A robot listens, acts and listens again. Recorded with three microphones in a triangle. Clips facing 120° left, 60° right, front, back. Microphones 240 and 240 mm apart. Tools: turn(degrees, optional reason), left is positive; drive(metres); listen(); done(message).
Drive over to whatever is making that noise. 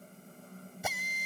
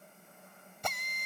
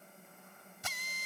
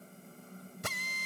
turn(degrees=-155, reason="The drill: 155° right.")
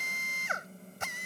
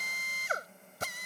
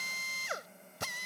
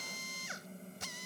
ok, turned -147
turn(degrees=-10, reason="The drill is now 10° right.")
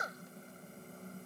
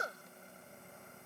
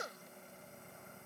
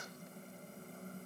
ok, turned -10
drive(metres=1.0)
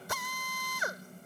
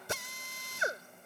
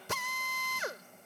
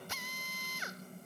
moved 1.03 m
drive(metres=1.0)
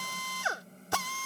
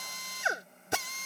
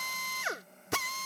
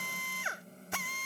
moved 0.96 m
turn(degrees=10, reason="The drill is now 10° left.")
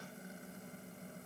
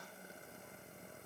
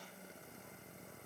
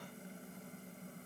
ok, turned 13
listen()
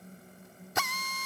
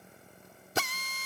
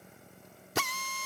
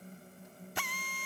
drive(metres=1.0)
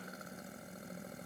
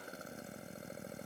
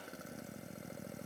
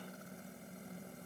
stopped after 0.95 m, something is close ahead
listen()
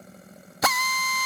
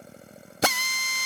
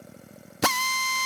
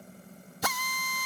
done("Arrived at the drill, straight ahead.")